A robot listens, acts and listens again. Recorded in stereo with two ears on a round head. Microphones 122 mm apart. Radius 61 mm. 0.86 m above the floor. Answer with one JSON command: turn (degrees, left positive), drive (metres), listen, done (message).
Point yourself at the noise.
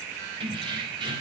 {"turn": -35}
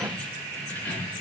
{"turn": 15}
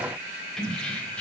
{"turn": 10}
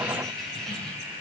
{"done": "Facing the keys jangling, 2 to 4 m away."}